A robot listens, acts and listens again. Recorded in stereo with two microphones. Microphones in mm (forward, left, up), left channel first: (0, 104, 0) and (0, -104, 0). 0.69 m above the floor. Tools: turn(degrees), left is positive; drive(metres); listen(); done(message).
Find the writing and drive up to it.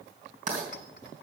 turn(degrees=-35)
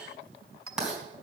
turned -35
drive(metres=1.0)
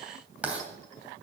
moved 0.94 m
drive(metres=1.0)
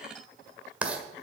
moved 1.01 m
drive(metres=1.0)
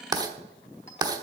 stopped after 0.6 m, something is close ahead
turn(degrees=-20)
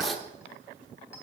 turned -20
done("I am next to the writing.")